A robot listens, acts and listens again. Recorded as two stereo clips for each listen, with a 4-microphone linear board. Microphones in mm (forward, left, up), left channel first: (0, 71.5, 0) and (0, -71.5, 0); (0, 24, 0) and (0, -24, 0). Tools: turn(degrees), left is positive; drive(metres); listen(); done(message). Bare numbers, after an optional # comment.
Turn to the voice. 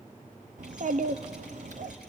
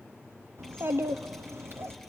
# The child speaking: about 60° right or 120° right.
turn(-60)
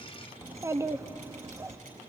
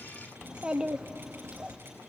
# So it is at 25° right.
turn(-25)
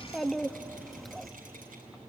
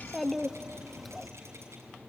done("Found it: a child speaking, straight ahead, under 1 m away.")